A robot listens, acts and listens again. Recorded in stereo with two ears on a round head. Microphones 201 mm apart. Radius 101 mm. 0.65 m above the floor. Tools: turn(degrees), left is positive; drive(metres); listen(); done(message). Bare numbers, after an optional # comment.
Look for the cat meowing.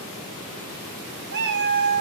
# The cat meowing: about 50° right or 130° right.
turn(-50)
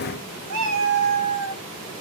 # So it is at 80° right.
turn(-80)
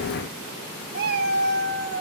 # The cat meowing is now 55° right.
turn(-55)
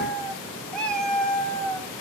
done("Found it: a cat meowing, straight ahead.")